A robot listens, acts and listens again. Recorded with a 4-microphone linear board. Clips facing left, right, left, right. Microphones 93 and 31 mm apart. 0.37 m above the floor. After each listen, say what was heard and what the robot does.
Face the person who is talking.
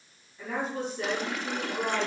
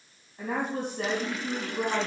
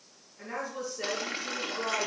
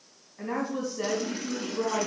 The woman speaking: about 55° right or 125° right. Turn 55° right.
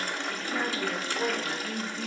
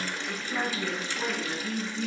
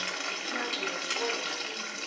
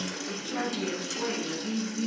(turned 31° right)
So it is at 25° right. Turn 25° right.
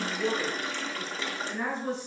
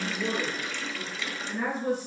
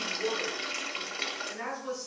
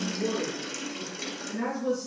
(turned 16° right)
The woman speaking is now 15° right. Turn 15° right.
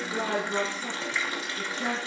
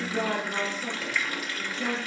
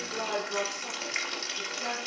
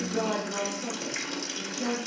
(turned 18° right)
Found it: a woman speaking, straight ahead, over 4 m away.